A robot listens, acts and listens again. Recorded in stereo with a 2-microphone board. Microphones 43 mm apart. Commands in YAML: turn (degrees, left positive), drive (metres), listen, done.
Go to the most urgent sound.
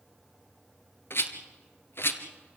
listen: true
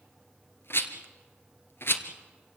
listen: true
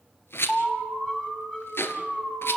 turn: 35
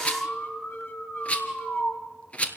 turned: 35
turn: 110
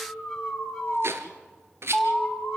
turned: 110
drive: 1.0
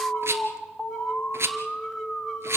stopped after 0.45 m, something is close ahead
done: "Something is in my way. I am facing the alarm but have not reached it."